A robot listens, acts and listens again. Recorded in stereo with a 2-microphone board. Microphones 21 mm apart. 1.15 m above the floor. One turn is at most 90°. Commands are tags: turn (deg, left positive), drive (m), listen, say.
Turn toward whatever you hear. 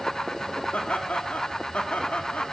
<turn deg="90"/>
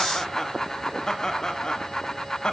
<turn deg="40"/>
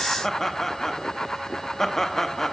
<turn deg="15"/>
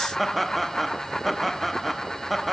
<say>Found it: laughter, straight ahead.</say>